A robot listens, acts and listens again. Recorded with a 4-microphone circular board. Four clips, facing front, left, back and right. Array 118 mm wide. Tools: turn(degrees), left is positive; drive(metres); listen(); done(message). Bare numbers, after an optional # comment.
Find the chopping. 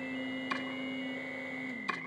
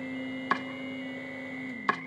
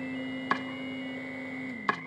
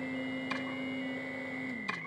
# The chopping: 135° left.
turn(135)
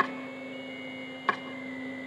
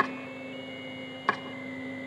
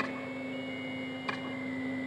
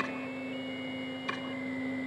# The chopping is now 55° left.
turn(55)
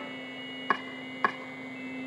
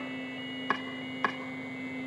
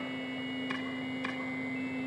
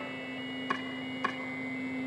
# The chopping is now 20° left.
turn(20)
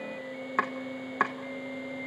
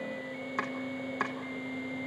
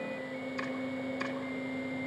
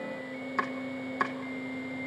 done("Found it: chopping, straight ahead, 1 to 2 m away.")